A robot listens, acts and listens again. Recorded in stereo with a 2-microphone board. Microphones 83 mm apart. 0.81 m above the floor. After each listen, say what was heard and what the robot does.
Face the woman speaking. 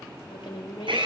Turn 90° left.
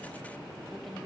Keep listening.
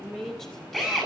Found it: a woman speaking, straight ahead.